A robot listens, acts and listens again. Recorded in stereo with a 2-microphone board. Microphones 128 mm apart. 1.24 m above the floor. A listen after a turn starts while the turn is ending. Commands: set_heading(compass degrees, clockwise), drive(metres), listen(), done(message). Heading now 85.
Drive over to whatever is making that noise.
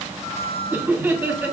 set_heading(105)
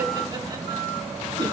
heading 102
listen()
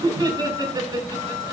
set_heading(247)
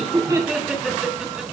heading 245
drive(1.0)
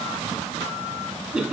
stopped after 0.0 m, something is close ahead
done("Something is in my way. I am facing the laughter but have not reached it.")